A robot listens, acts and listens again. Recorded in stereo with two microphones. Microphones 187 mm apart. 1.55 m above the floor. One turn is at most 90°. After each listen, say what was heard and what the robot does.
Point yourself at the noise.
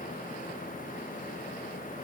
Keep listening.
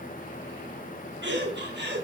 The laughter: about 70° right or 110° right. Turn 70° right.
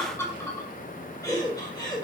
So it is at 20° left. Turn 20° left.
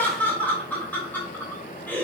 The laughter is now 10° left. Turn 10° left.
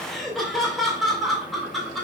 Facing the laughter, 2 to 4 m away.